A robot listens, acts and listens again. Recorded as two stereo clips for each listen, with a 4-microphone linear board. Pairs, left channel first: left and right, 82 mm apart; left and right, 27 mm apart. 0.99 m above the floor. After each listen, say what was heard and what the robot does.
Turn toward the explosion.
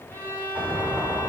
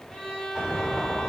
Turn 30° right.
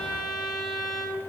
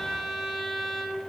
Keep listening.
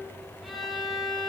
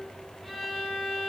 I heard an explosion, but can't make it out now. It was about 20° left or 140° right.